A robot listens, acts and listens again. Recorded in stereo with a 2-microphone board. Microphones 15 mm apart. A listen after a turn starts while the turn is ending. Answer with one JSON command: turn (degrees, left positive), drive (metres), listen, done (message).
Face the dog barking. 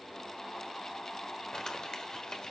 {"listen": true}
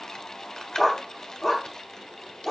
{"turn": 20}
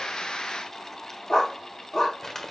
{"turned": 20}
{"turn": 135}
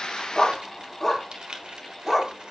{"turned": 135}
{"turn": 15}
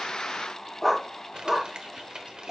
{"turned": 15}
{"done": "Found it: a dog barking, straight ahead."}